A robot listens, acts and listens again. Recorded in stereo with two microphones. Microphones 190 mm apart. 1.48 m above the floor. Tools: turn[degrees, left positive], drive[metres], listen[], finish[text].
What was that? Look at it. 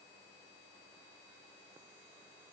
Action: listen[]
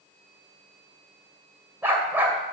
Action: turn[-30]
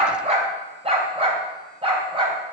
Thought: So it is at 150° right.
Action: turn[-150]
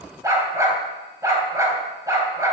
Thought: The dog barking is now 15° right.
Action: turn[-15]
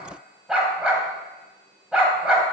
Action: finish[Found it: a dog barking, straight ahead.]